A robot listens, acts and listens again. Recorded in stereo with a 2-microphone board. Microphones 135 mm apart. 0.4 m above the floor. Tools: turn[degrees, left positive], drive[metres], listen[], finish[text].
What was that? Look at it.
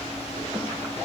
Action: listen[]
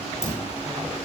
Thought: The dropped coin: about 20° left or 160° left.
Action: turn[20]
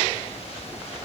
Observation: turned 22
Action: listen[]
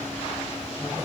Action: finish[I heard a dropped coin, but can't make it out now. It was about straight ahead or 135° left.]